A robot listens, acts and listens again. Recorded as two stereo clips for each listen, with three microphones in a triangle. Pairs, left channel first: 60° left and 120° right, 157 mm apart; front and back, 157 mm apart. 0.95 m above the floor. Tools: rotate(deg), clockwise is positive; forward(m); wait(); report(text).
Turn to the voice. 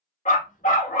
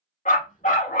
wait()
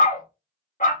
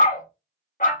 wait()
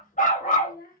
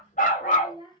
rotate(-60)
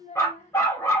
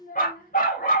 rotate(-20)
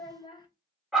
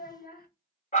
report("Found it: a child speaking, straight ahead.")